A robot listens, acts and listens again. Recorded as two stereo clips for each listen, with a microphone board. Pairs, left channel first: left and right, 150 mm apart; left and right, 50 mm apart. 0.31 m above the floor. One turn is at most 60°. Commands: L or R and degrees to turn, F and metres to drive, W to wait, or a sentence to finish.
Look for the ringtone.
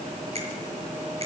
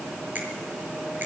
W
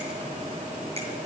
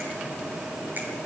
W
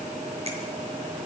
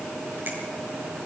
I can't make out a ringtone.